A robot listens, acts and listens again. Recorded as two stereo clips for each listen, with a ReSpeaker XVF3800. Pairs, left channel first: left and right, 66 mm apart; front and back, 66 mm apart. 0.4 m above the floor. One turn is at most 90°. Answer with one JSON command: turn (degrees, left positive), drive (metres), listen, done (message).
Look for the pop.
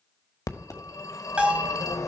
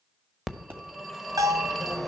{"turn": 90}
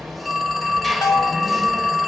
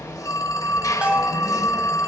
{"turn": 35}
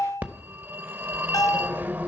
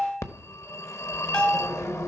{"done": "Facing where the pop came from. I can't hear it now."}